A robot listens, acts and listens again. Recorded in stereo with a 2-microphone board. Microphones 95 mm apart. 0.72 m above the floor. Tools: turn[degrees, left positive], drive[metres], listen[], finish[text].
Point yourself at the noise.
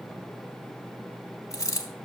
Thought: The dropped coin: about 35° left or 145° left.
Action: turn[35]
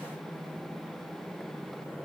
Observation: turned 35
Action: listen[]
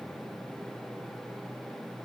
Action: finish[I heard a dropped coin, but can't make it out now. It was about straight ahead or 110° left.]